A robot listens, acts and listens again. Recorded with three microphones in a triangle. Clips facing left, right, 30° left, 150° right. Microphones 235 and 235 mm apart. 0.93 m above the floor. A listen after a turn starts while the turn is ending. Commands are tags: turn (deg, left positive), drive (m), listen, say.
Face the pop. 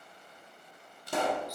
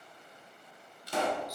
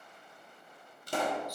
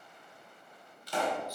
<turn deg="60"/>
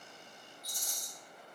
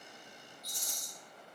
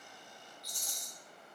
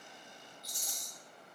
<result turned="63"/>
<say>I heard a pop from this way, but can't make it out now.</say>